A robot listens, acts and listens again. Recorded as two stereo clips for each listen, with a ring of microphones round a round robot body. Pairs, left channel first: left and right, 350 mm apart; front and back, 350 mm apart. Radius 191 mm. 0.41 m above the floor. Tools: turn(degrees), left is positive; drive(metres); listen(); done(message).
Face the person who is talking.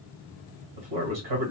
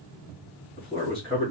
turn(degrees=-85)
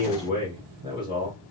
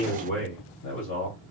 turn(degrees=-15)
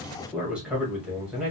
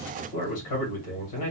done("Found it: a man speaking, straight ahead, 2 to 4 m away.")